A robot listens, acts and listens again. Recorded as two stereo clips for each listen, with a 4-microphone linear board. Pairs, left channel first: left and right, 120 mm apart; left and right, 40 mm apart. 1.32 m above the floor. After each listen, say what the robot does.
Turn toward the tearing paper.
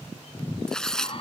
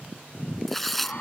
Turn 30° left.
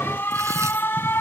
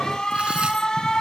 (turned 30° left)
Keep listening.
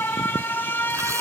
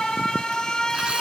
Keep listening.
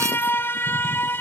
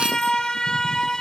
I heard tearing paper, but can't make it out now. It was about 25° right or 145° left.